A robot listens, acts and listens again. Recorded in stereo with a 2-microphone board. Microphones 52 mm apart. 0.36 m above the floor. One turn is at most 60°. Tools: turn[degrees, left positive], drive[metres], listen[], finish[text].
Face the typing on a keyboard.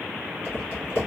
Thought: The typing on a keyboard: about 50° left or 130° left.
Action: turn[50]
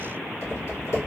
Thought: So it is at 75° left.
Action: turn[60]
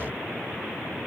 Thought: Nothing new. It was at 15° left.
Action: turn[15]
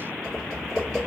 Thought: The typing on a keyboard is now 15° left.
Action: turn[15]
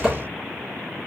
Action: finish[Facing the typing on a keyboard.]